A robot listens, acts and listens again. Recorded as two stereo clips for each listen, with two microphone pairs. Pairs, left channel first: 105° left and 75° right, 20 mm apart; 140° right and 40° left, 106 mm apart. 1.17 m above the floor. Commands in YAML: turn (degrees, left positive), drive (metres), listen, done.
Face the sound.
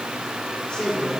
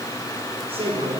turn: 70
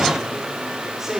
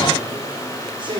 done: "Facing the man speaking, over 4 m away."